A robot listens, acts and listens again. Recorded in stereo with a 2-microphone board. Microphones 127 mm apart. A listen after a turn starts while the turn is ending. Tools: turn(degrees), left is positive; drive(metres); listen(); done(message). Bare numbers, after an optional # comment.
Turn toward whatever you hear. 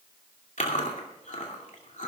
turn(90)
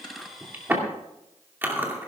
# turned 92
# So it is at 15° right.
turn(-15)
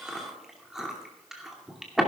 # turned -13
done("Facing the chewing.")